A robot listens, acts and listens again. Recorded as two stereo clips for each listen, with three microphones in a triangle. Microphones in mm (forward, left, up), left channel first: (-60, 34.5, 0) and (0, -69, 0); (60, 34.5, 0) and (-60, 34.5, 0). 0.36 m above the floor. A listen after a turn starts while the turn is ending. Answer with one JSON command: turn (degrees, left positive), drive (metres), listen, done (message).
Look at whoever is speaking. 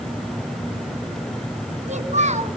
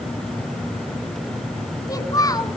{"turn": -60}
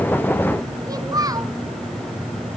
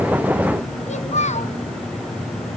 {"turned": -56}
{"done": "Found it: a child speaking, straight ahead."}